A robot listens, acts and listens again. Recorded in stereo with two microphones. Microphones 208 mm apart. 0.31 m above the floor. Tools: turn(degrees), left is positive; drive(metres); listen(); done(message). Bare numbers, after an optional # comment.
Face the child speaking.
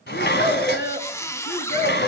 # The child speaking: about 50° left or 130° left.
turn(50)
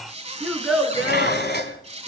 done("Facing the child speaking, 2 to 4 m away.")